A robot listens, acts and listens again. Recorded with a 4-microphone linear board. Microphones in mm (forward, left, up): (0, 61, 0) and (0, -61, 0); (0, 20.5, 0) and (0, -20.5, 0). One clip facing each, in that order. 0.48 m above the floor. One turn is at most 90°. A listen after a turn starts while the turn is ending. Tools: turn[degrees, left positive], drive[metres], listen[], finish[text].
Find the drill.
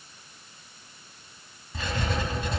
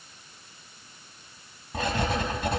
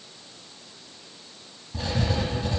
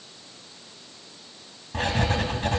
Action: listen[]
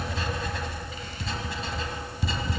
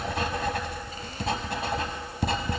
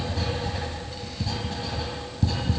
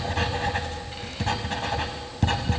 Action: listen[]
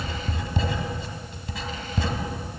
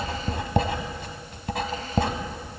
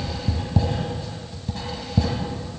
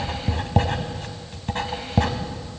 Action: finish[I can't make out a drill to turn to.]